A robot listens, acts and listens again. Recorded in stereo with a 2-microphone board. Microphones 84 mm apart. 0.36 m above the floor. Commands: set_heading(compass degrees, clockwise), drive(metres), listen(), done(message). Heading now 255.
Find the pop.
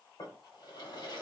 listen()
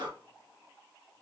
listen()
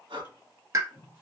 set_heading(295)
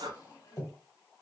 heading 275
listen()
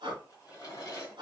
done("I heard a pop, but can't make it out now. It was about 20° right or 120° right.")